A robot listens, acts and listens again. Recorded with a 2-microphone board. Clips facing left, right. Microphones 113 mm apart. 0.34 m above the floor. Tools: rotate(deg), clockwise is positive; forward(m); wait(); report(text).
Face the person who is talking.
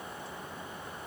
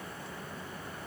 wait()
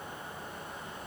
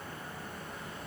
wait()
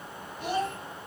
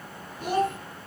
rotate(45)
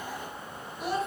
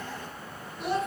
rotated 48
report("Found it: a child speaking, straight ahead, 2 to 4 m away.")